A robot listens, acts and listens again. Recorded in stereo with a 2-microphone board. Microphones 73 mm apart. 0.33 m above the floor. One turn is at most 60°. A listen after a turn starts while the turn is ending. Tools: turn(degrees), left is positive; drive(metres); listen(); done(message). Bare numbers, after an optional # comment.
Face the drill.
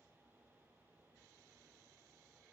listen()
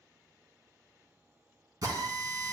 # The drill: about 55° right or 125° right.
turn(-55)
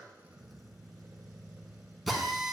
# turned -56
done("Facing the drill.")